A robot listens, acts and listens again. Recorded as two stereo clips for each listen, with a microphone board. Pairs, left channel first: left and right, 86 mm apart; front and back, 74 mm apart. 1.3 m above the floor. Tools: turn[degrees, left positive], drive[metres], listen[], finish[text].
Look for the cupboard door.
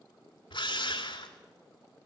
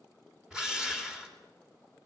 Action: listen[]
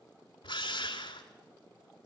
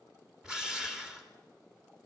Action: listen[]
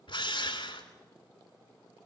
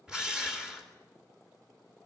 Action: finish[I can't make out a cupboard door, only a drill.]